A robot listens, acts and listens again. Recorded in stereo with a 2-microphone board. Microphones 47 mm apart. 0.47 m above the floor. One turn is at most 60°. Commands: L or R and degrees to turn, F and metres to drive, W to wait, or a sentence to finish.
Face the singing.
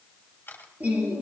R30
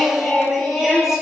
Facing the singing, over 4 m away.